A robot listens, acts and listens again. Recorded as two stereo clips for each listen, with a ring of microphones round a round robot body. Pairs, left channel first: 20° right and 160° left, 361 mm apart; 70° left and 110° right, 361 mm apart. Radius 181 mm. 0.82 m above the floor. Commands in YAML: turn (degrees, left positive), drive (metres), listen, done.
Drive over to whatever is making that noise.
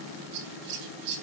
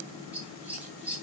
turn: 160
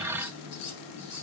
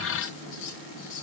turn: 30
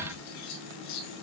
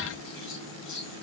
turn: 10
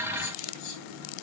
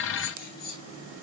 drive: 1.0
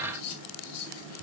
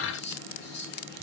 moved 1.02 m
drive: 1.0
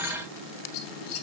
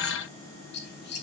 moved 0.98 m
drive: 1.0
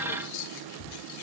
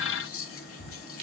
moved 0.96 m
turn: 10
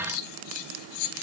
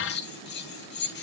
drive: 1.0
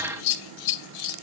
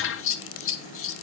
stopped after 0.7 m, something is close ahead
turn: 10
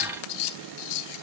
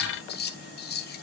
done: "Arrived at the scissors, straight ahead."